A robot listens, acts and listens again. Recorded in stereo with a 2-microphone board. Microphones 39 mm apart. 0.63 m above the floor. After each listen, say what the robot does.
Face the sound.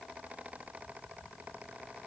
Keep listening.
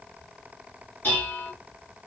Turn 50° left.
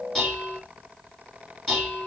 Facing the dishes clattering, 2 to 4 m away.